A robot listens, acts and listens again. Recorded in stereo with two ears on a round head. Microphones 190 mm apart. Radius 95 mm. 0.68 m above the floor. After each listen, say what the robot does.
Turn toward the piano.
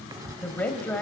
Keep listening.
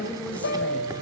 Turn 55° left.
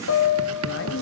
Turn 65° left.
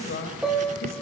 Facing the piano.